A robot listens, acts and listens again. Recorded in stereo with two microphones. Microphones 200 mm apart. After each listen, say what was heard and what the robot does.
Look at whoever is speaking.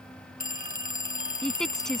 Turn 30° left.
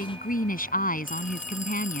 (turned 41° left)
So it is at 135° left. Turn 135° left.
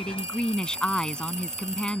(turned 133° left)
Found it: a woman speaking, straight ahead.